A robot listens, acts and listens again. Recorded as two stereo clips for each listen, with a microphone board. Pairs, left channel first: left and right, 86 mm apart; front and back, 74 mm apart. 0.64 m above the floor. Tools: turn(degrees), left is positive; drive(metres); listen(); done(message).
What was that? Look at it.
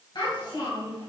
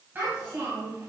turn(degrees=120)
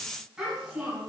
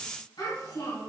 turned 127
done("Facing the child speaking, over 4 m away.")